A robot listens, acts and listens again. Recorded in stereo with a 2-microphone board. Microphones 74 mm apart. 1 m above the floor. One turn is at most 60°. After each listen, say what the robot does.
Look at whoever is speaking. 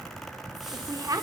Turn 50° right.
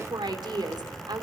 Turn 60° right.
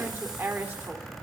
Turn 30° right.
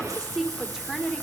Found it: a woman speaking, straight ahead, 2 to 4 m away.